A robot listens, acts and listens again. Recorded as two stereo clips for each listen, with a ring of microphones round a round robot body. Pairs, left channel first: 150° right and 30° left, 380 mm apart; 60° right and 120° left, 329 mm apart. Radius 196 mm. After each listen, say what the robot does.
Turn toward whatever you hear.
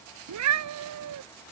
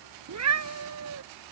Turn 80° left.
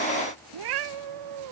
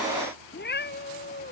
Found it: a cat meowing, straight ahead.